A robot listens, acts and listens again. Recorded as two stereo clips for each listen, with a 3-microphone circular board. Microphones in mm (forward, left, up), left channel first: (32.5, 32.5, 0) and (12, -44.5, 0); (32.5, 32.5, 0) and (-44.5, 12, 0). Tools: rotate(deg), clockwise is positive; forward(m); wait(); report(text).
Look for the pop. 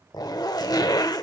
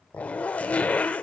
wait()
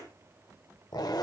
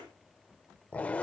wait()
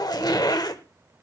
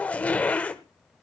report("I can't make out a pop, only a zipper.")